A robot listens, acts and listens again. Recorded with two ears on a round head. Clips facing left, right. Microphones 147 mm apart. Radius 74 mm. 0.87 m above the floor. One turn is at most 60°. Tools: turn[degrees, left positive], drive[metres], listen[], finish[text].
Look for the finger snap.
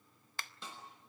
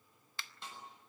Thought: The finger snap: about 40° left or 140° left.
Action: turn[40]
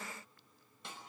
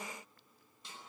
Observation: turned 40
Action: listen[]
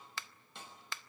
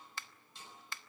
Thought: So it is at 90° left.
Action: turn[60]
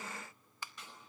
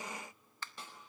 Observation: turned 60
Thought: The finger snap is now 10° left.
Action: turn[10]
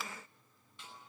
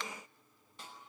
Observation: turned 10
Action: listen[]
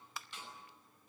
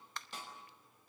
Action: finish[Facing the finger snap.]